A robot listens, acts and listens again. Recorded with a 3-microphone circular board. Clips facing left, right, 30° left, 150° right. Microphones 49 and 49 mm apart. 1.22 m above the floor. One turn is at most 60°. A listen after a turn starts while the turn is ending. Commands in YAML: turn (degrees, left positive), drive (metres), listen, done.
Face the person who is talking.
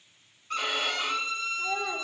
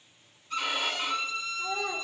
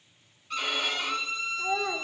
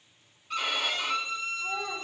turn: 15
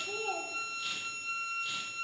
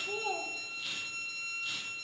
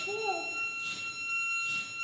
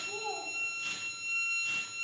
turn: 10
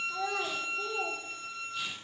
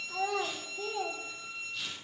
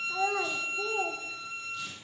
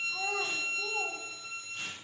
done: "Found it: a child speaking, straight ahead, 1 to 2 m away."